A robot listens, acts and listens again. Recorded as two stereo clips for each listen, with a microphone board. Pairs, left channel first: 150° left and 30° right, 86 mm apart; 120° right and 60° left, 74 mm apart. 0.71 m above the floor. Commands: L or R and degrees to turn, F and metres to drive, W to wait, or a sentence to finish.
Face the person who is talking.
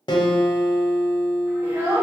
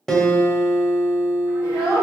R85
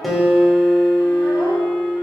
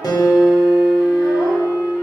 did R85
W
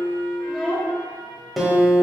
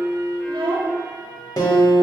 L55
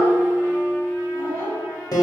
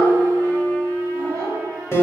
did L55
L20
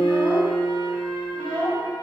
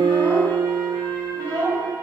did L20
Facing the child speaking.